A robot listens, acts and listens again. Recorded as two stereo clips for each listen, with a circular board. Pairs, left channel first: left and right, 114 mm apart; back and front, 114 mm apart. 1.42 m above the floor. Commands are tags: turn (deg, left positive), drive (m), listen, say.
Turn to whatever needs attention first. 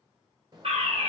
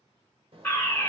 <turn deg="-110"/>
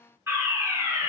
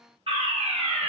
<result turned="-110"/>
<turn deg="-25"/>
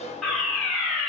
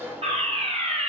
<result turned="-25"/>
<say>Facing the fire alarm, 1 to 2 m away.</say>